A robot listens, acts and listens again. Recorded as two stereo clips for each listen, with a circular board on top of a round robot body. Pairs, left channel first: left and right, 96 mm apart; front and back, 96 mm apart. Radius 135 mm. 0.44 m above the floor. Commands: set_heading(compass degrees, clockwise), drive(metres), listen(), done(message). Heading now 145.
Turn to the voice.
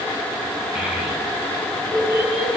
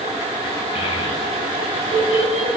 set_heading(155)
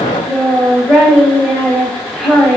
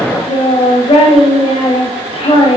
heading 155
done("Facing the child speaking, 2 to 4 m away.")